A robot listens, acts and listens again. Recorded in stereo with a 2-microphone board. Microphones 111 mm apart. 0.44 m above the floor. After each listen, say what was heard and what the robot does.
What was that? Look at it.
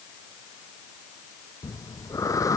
The breathing: about 30° left or 150° left. Turn 30° left.
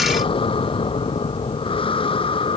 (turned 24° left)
So it is at 125° left. Turn 125° left.
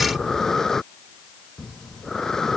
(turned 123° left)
Found it: breathing, straight ahead.